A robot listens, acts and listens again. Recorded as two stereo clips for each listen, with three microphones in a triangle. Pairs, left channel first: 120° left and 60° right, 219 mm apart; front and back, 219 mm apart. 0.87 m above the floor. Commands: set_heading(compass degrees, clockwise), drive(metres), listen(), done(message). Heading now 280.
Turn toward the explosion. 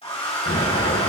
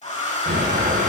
set_heading(145)
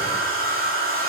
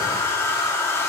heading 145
done("Facing where the explosion came from. I can't hear it now.")